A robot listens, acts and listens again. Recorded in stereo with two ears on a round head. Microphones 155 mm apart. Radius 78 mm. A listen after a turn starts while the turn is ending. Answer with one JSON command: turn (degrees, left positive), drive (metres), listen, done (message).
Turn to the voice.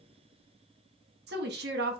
{"turn": -65}
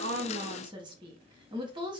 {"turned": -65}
{"turn": -30}
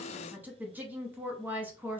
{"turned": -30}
{"turn": -10}
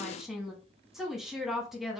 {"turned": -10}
{"done": "Found it: a woman speaking, straight ahead."}